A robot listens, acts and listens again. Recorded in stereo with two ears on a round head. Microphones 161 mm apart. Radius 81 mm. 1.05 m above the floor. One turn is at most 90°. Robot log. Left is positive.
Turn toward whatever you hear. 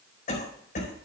note: The cough: about 45° left or 135° left.
cmd yaw +45
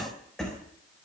end: Found it: a cough, straight ahead.